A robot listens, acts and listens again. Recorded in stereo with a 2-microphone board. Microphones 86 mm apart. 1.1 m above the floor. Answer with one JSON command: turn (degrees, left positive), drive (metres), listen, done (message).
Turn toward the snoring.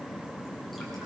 {"listen": true}
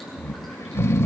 {"turn": 30}
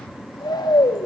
{"turn": 115}
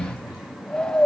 {"turn": 10}
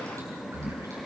{"done": "Facing the snoring."}